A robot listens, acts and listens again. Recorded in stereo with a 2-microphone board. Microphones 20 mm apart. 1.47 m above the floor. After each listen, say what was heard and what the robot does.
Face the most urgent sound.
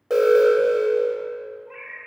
The alarm: about 20° right or 160° right. Turn 20° right.
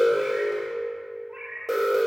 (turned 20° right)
Facing the alarm.